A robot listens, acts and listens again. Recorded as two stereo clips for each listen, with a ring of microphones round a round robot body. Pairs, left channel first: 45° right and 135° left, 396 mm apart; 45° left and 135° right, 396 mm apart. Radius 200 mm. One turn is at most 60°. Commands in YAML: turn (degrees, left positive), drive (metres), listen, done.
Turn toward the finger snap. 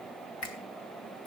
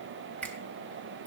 turn: -40
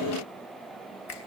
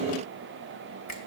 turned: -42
done: "Found it: a finger snap, straight ahead, 2 to 4 m away."